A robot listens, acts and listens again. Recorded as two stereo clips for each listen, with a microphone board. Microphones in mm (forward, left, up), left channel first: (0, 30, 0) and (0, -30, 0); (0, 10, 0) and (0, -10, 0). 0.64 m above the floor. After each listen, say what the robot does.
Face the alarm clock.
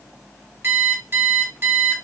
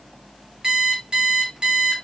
Turn 40° right.
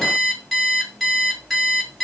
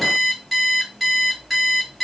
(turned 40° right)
Facing the alarm clock.